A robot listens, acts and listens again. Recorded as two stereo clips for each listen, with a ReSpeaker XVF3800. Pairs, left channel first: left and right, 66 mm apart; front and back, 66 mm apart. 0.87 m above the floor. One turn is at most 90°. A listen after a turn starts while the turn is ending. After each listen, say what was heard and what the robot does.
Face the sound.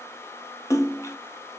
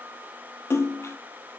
The splash: 50° left. Turn 50° left.
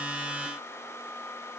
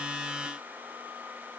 Facing where the splash came from. I can't hear it now.